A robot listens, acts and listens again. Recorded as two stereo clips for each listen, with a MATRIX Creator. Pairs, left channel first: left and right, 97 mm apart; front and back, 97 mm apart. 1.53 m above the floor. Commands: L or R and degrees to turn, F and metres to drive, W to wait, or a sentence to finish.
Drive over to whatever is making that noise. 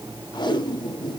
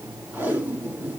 L115
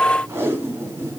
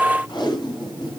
R30
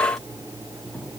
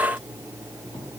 W
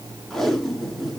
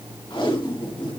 F1.0
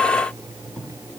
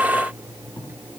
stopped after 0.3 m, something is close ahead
W
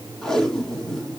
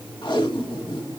L10
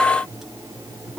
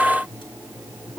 W
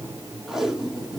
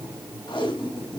Something is in my way. I am facing the tape being pulled but have not reached it.